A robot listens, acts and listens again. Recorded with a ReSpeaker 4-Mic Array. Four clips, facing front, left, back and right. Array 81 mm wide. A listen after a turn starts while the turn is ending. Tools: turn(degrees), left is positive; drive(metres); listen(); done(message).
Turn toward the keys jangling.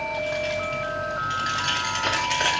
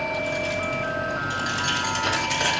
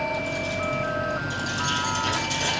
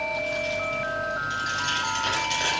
turn(degrees=10)
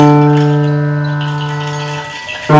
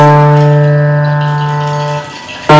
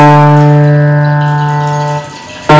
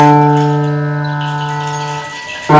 done("Facing the keys jangling, 2 to 4 m away.")